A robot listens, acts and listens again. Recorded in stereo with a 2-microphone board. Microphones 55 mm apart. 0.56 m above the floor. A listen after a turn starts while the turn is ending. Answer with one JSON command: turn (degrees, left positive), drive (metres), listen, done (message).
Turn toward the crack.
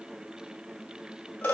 {"listen": true}
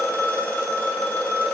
{"listen": true}
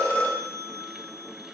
{"done": "I can't make out a crack to turn to."}